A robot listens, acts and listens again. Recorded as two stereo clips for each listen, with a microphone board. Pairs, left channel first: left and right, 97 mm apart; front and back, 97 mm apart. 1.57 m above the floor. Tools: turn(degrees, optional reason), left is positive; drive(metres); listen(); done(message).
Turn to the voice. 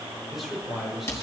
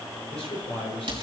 done("Facing the man speaking, over 4 m away.")